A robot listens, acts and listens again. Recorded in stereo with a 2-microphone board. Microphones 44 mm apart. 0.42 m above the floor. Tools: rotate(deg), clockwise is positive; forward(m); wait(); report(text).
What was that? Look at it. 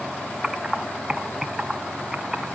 rotate(30)
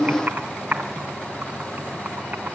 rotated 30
rotate(140)
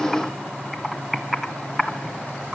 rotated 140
report("Found it: typing on a keyboard, straight ahead, 1 to 2 m away.")